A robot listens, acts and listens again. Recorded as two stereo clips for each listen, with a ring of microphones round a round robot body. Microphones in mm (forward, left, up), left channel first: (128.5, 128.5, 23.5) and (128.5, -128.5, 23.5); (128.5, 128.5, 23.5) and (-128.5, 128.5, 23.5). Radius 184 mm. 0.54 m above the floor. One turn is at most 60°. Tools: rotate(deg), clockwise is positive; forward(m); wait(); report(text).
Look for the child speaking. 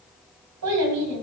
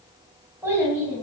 rotate(60)
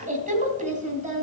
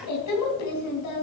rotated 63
rotate(30)
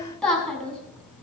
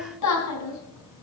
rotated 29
report("Facing the child speaking, 2 to 4 m away.")